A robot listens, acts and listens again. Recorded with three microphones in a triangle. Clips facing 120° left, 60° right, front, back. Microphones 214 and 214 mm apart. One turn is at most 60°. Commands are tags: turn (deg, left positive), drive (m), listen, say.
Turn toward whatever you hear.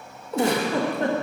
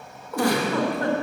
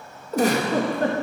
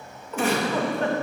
<turn deg="55"/>
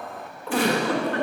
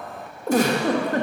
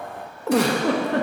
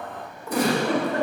<turn deg="-15"/>
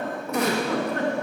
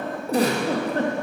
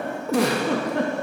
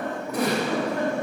<say>Facing the giggle.</say>